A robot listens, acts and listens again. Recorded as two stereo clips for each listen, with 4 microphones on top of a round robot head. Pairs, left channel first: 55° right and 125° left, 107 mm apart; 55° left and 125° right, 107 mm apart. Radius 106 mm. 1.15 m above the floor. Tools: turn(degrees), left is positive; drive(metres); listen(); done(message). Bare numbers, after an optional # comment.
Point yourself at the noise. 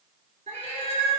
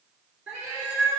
# The cat meowing: 155° left.
turn(155)
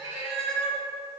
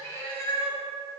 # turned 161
# The cat meowing is now 20° right.
turn(-20)
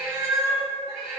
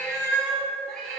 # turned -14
# The cat meowing is now 40° right.
turn(-40)
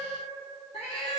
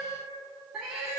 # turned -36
# The cat meowing is now 55° right.
turn(-55)
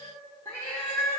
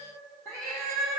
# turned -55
# The cat meowing is now 10° right.
turn(-10)
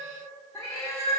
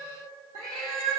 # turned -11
done("Facing the cat meowing.")